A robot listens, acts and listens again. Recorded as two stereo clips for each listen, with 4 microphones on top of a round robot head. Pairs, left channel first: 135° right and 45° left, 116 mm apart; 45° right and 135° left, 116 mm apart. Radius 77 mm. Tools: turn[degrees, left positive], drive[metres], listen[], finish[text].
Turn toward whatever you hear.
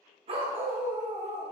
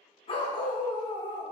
Thought: The dog barking: 10° left.
Action: turn[10]
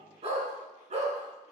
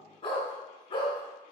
Thought: The dog barking is now 10° left.
Action: turn[10]
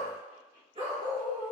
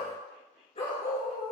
Action: finish[Found it: a dog barking, straight ahead, 2 to 4 m away.]